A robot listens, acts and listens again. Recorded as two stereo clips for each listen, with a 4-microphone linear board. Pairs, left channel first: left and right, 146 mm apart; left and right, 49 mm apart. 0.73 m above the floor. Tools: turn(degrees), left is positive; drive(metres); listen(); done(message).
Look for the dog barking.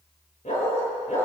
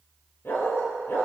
turn(degrees=60)
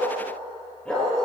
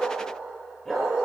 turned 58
turn(degrees=10)
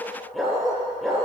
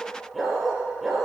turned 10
done("Found it: a dog barking, straight ahead.")